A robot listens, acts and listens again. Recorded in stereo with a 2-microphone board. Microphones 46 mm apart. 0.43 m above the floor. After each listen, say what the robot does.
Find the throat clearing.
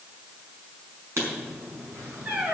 Keep listening.
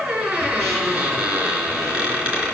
Keep listening.
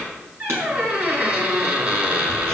I can't make out throat clearing to turn to.